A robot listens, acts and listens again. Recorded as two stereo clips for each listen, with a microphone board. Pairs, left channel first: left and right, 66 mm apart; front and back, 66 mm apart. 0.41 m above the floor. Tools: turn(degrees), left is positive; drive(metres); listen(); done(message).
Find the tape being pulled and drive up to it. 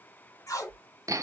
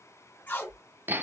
turn(degrees=60)
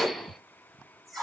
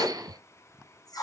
drive(metres=1.0)
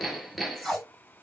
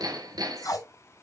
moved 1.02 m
drive(metres=1.0)
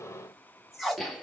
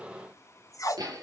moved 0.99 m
drive(metres=1.0)
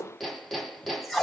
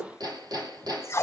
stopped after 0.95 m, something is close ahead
done("I am next to the tape being pulled.")